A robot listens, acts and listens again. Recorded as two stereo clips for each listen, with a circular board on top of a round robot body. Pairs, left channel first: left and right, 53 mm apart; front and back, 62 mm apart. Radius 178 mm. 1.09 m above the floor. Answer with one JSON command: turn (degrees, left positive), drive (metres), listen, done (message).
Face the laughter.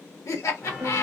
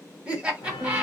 {"turn": 105}
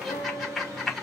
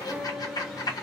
{"done": "Found it: laughter, straight ahead, 1 to 2 m away."}